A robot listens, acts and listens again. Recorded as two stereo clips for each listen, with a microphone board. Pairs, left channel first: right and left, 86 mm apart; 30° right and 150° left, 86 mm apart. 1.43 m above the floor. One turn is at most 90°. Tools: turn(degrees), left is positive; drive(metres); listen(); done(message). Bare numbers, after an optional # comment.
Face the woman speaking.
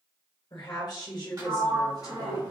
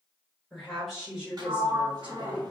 # The woman speaking: 130° right.
turn(-90)
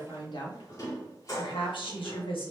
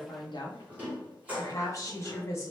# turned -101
# The woman speaking is now 90° right.
turn(-90)
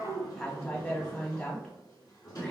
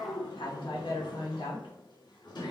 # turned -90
# The woman speaking is now 15° right.
turn(-15)
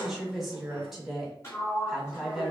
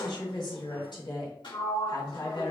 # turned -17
done("Found it: a woman speaking, straight ahead, 1 to 2 m away.")